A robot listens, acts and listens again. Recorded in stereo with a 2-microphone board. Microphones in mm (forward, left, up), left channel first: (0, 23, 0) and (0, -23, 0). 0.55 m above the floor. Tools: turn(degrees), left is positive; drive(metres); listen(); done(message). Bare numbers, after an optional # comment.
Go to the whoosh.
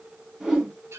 # The whoosh: about 15° right or 165° right.
turn(-15)
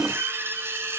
# So it is at 150° right.
turn(-150)
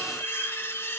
listen()
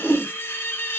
# The whoosh is now 40° left.
turn(40)
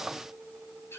listen()
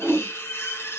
# The whoosh is now 15° right.
turn(-15)
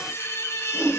drive(1.0)
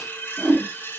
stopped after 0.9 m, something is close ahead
done("I am next to the whoosh.")